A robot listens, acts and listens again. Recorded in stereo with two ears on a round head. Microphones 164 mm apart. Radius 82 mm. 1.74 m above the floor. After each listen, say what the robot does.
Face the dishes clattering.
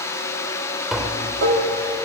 Turn 70° right.
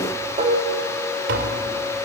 Turn 35° right.
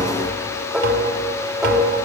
Found it: dishes clattering, straight ahead.